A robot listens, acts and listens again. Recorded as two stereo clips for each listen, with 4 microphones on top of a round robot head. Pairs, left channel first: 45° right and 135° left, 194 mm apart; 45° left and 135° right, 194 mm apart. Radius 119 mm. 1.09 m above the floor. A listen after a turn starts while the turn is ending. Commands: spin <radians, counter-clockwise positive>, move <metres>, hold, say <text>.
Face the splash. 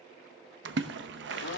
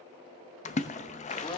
spin 1.75
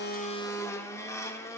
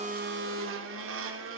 say I heard a splash from this way, but can't make it out now.